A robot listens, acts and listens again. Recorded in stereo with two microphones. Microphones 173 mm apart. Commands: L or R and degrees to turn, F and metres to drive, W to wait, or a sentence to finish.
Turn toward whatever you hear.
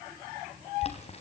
L40
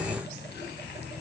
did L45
W
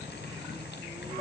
W
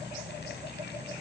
I heard boiling, but can't make it out now. It was about 5° right or 95° left.